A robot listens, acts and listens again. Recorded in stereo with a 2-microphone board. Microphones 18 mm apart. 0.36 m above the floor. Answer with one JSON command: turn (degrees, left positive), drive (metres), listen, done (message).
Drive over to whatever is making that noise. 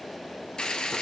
{"turn": 60}
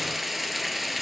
{"drive": 1.0}
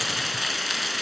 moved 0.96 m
{"drive": 1.0}
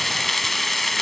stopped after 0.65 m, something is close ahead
{"turn": 15}
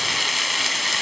{"done": "I am next to the frying."}